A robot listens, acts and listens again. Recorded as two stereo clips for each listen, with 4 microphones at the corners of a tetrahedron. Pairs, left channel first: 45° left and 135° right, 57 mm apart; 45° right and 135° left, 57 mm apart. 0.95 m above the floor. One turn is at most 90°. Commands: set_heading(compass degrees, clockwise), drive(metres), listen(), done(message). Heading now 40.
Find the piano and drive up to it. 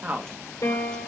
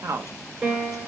set_heading(345)
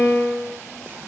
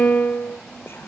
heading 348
drive(1.0)
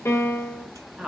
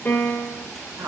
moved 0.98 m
set_heading(338)
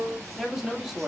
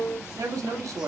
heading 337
drive(1.0)
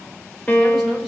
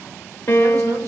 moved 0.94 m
set_heading(352)
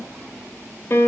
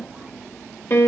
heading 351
drive(1.0)
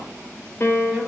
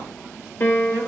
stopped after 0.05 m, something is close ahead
done("Arrived at the piano, straight ahead.")